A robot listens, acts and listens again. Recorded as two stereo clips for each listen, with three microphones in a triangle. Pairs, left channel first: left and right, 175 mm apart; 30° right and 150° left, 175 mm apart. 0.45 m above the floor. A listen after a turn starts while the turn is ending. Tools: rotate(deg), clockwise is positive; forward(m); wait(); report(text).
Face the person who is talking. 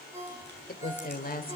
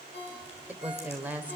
rotate(-70)
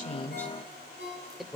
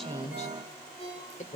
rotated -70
report("Found it: a woman speaking, straight ahead.")